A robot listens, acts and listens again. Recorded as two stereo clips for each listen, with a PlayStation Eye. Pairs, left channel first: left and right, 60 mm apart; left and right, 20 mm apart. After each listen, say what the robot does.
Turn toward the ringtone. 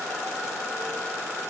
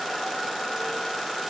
Keep listening.
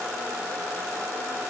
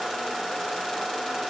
Keep listening.
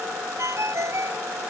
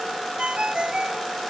Turn 55° right.
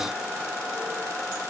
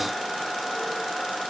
Keep listening.
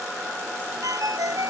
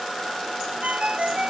Turn 75° right.
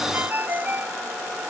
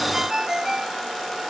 Turn 30° right.
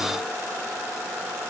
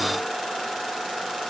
Keep listening.
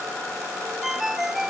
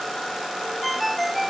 Facing the ringtone.